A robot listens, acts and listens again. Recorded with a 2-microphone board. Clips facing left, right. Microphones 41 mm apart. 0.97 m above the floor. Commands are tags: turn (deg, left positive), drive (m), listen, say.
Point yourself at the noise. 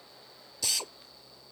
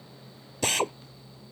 <turn deg="-45"/>
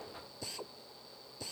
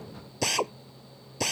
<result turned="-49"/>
<turn deg="-85"/>
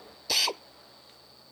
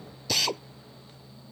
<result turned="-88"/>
<say>Facing the drill.</say>